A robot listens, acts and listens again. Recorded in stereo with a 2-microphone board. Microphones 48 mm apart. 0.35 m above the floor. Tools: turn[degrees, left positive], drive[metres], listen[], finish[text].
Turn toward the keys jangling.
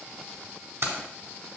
Thought: The keys jangling: about 70° right or 110° right.
Action: turn[-70]
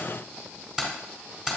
Thought: So it is at 10° right.
Action: turn[-10]
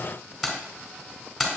Action: finish[Found it: keys jangling, straight ahead.]